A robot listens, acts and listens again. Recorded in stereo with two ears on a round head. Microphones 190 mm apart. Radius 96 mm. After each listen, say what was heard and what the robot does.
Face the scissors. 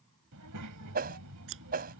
The scissors: about 65° right or 115° right. Turn 65° right.
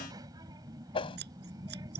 So it is at 50° right. Turn 50° right.
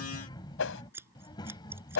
The scissors is now 10° right. Turn 10° right.
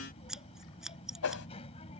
Facing the scissors.